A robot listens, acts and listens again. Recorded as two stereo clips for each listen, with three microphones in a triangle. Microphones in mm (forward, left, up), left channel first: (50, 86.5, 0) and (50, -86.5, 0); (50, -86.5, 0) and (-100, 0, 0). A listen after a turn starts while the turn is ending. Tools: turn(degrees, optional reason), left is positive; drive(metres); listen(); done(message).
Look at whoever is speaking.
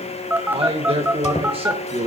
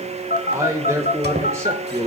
turn(degrees=-140, reason="The man speaking: 140° right.")
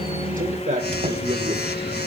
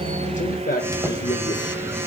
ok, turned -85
turn(degrees=-55, reason="The man speaking is now 55° right.")
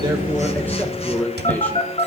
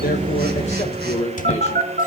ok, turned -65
turn(degrees=10, reason="The man speaking is now 10° left.")
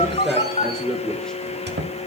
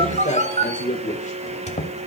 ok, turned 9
done("Found it: a man speaking, straight ahead.")